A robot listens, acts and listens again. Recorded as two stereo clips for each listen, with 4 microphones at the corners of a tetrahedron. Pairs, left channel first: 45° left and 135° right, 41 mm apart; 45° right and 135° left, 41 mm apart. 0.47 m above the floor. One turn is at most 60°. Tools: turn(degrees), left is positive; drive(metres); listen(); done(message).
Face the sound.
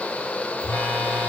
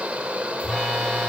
turn(degrees=35)
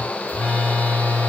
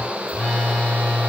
turn(degrees=10)
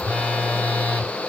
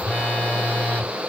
done("Facing the phone buzzing, 1 to 2 m away.")